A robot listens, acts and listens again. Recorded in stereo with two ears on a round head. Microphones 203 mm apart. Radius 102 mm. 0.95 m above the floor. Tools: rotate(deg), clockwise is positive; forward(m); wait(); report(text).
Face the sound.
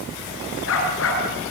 rotate(-65)
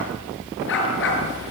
rotate(-55)
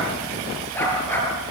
rotate(-10)
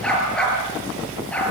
report("Found it: a dog barking, straight ahead, over 4 m away.")